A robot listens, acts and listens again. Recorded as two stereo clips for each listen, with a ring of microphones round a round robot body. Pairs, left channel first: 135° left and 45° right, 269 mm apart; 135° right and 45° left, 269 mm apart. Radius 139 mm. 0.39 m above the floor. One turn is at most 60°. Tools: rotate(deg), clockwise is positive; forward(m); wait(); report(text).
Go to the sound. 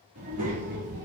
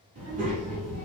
rotate(-15)
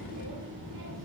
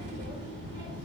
forward(1.0)
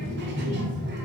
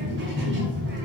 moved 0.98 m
forward(1.0)
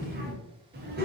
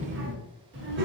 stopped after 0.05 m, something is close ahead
report("Arrived at the child speaking, straight ahead.")